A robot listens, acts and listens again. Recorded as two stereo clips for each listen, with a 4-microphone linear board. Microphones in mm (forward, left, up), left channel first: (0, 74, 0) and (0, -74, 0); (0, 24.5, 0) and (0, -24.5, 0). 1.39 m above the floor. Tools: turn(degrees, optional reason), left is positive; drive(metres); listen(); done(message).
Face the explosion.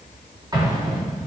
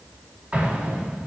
turn(degrees=-30, reason="The explosion: about 30° right or 150° right.")
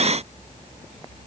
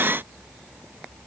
listen()
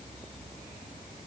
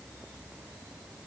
done("I heard an explosion, but can't make it out now. It was about straight ahead or 120° right.")